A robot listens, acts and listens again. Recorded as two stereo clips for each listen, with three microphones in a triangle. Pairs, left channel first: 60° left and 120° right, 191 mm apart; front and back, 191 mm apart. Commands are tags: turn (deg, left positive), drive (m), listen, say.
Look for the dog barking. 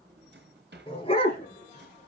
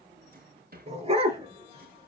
<turn deg="120"/>
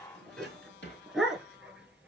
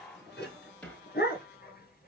<turn deg="-30"/>
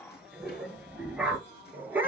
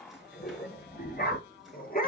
<turn deg="-40"/>
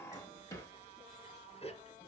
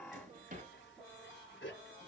<say>Found it: a dog barking, straight ahead.</say>